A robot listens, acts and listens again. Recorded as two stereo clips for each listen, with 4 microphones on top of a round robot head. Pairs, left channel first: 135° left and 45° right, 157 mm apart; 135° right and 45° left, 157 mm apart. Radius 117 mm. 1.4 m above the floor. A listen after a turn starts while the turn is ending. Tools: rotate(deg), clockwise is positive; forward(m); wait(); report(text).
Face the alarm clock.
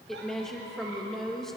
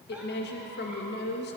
wait()
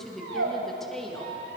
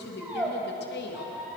wait()
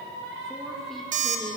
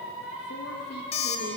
rotate(80)
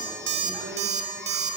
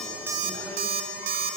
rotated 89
report("Facing the alarm clock.")